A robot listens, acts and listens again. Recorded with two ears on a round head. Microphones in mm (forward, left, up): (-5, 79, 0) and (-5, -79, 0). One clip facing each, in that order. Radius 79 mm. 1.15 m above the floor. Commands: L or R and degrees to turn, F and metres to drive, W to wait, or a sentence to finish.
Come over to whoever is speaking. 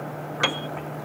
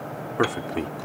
R75
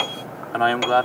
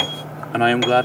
R25
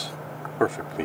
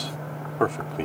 F1.0
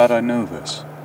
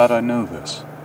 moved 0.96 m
F1.0
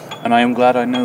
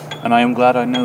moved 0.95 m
F1.0
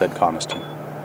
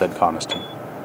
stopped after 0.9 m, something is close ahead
Arrived at the man speaking, straight ahead.